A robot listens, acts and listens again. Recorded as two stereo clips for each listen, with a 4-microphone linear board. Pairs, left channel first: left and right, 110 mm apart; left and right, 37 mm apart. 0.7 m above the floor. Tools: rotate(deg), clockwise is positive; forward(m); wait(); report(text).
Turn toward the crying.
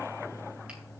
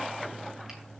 wait()
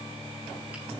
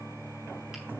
wait()
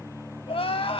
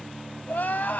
rotate(-60)
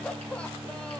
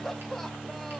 rotate(-10)
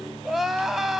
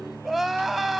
report("Found it: crying, straight ahead, under 1 m away.")